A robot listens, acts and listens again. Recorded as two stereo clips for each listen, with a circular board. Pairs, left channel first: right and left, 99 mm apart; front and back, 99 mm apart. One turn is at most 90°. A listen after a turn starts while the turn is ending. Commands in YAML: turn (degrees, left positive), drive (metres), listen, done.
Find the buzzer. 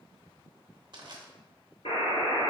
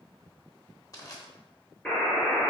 turn: -80
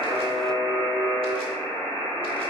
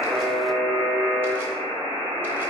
turn: -20
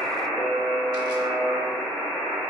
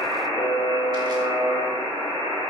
done: "Facing the buzzer, 1 to 2 m away."